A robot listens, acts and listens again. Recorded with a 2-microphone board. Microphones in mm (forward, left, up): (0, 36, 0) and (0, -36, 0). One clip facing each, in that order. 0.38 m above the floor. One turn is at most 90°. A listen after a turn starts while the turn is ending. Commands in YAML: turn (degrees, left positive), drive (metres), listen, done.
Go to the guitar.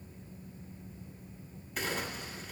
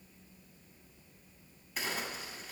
listen: true
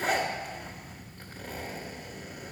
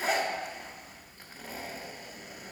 listen: true
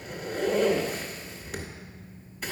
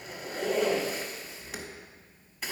done: "I can't make out a guitar, only a zipper."